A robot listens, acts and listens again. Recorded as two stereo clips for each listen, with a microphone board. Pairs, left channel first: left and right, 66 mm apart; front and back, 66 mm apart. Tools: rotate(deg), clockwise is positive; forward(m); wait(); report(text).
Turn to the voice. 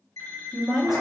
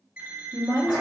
rotate(175)
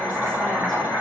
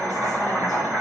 wait()
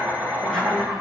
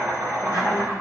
wait()
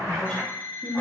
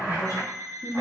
rotate(-10)
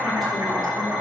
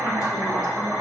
wait()
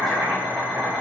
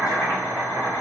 wait()
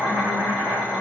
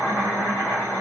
report("I heard a woman speaking from this way, but can't make it out now.")